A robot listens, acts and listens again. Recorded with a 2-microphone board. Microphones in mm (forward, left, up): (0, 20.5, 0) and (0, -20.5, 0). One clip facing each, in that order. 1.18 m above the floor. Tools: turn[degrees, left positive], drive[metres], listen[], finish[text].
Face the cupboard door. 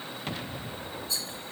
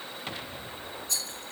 Action: listen[]
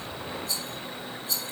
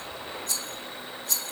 Action: listen[]
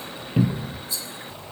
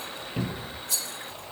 Thought: The cupboard door: about 15° left or 165° left.
Action: turn[15]
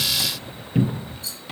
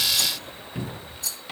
Thought: So it is at 150° left.
Action: turn[150]
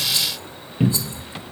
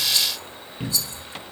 Thought: The cupboard door is now 20° left.
Action: turn[20]
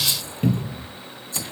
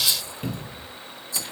Action: finish[Facing the cupboard door.]